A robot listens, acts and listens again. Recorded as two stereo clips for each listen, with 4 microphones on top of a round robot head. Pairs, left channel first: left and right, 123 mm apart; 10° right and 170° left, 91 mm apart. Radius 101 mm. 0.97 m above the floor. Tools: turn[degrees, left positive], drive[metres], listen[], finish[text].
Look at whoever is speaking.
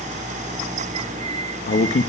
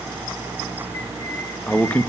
Thought: The man speaking: 70° left.
Action: turn[70]
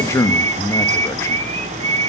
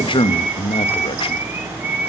Thought: The man speaking is now 20° left.
Action: turn[20]
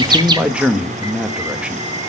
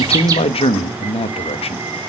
Thought: The man speaking is now 10° right.
Action: turn[-10]
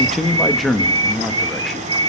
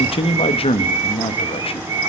Action: finish[Found it: a man speaking, straight ahead, 1 to 2 m away.]